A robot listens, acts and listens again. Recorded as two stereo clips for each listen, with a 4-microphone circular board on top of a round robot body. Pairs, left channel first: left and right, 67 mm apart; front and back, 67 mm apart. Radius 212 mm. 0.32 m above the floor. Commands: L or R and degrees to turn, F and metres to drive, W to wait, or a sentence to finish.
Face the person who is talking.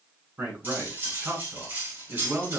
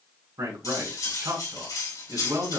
R155
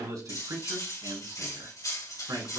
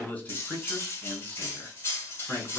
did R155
R70
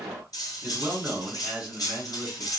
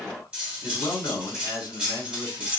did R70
R15
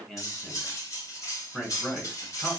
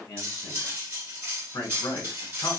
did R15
Facing the man speaking.